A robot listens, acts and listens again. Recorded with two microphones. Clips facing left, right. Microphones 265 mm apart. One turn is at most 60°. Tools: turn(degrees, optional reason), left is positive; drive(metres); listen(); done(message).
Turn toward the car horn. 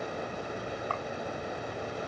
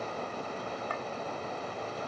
listen()
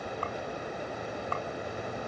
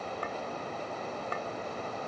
listen()
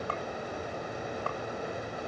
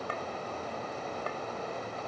done("I can't make out a car horn.")